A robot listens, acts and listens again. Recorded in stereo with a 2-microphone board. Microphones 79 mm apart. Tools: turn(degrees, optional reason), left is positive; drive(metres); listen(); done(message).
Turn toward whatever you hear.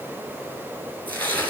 turn(degrees=20, reason="The tearing paper: about 20° left or 160° left.")
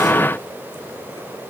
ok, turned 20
listen()
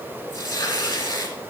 turn(degrees=140, reason="So it is at 140° left.")
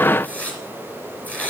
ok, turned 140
turn(degrees=20, reason="The tearing paper is now 20° left.")
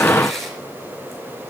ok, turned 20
done("Facing the tearing paper, 2 to 4 m away.")